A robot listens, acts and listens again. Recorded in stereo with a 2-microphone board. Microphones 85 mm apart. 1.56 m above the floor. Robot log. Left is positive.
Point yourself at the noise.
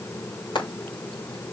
cmd yaw +90
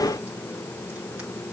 cmd idle
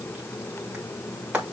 note: The frying is now 10° right.
cmd yaw -10
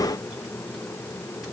cmd idle
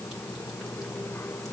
cmd idle
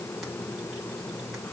end: I heard frying from this way, but can't make it out now.